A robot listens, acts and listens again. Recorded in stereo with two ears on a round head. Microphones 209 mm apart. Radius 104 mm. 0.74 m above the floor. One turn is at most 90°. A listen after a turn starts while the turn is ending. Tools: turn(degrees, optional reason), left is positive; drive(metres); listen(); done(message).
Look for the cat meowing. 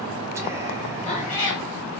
turn(degrees=35, reason="The cat meowing: about 35° left or 145° left.")
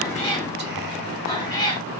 turn(degrees=20, reason="So it is at 20° left.")
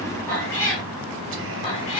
turn(degrees=25, reason="The cat meowing is now 25° left.")
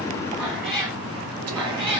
done("Found it: a cat meowing, straight ahead, 2 to 4 m away.")